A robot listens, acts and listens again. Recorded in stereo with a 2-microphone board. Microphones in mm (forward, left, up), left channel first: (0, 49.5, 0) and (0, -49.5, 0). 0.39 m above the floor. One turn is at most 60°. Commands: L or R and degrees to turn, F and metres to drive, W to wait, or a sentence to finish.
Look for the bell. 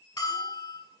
L35
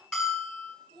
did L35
Found it: a bell, straight ahead, over 4 m away.